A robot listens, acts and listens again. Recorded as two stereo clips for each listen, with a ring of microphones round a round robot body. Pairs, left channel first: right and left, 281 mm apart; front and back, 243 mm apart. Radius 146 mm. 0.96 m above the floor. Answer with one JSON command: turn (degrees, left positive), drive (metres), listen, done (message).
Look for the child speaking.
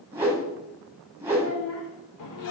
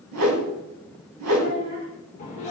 {"turn": -135}
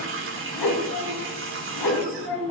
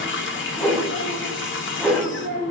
{"turn": -45}
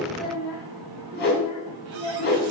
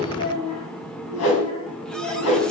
{"turn": -10}
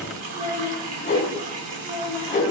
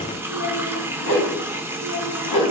{"done": "Facing the child speaking."}